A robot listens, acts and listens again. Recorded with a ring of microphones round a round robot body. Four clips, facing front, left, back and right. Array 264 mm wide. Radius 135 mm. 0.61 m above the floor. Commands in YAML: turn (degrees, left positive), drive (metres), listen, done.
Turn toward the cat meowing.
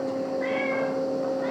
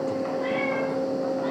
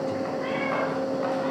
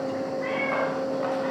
turn: 65
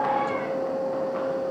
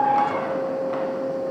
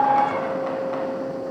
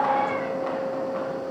listen: true
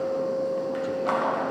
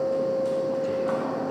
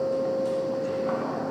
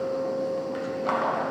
listen: true
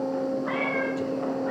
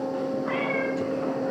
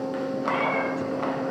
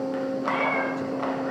turn: -10
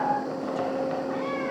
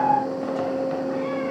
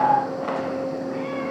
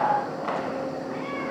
listen: true
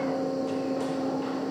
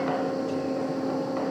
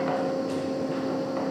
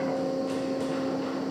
listen: true
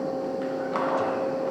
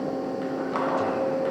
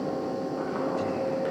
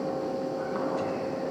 done: "I heard a cat meowing from this way, but can't make it out now."